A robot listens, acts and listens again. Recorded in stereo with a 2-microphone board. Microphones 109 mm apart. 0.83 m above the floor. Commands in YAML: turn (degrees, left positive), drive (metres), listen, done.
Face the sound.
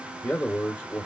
turn: 25
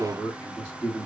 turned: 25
turn: 30
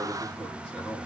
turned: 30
done: "Facing the man speaking, 1 to 2 m away."